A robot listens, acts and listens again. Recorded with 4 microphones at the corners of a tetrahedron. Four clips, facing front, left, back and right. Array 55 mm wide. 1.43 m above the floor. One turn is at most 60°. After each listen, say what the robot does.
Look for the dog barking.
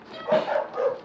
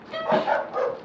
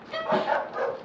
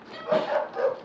Turn 60° left.
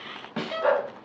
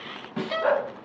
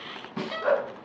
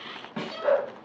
Turn 25° left.
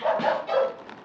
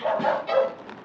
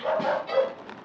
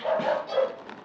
Turn 20° left.
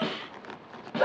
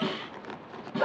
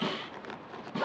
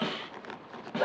Found it: a dog barking, straight ahead, 2 to 4 m away.